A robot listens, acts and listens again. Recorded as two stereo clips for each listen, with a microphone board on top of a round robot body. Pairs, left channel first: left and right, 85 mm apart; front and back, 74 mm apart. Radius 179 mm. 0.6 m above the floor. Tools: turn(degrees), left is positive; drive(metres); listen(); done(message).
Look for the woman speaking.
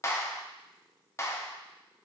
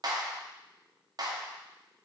listen()
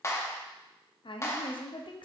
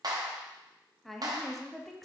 turn(degrees=85)
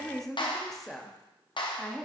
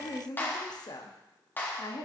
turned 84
done("Found it: a woman speaking, straight ahead.")